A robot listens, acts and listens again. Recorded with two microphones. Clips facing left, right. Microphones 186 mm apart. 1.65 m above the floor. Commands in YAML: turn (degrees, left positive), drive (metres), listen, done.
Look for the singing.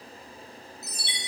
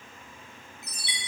listen: true
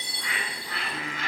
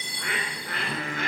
turn: -45
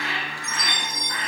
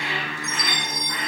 turn: -85
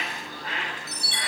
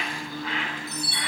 turn: -35
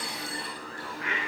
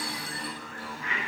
done: "Facing the singing."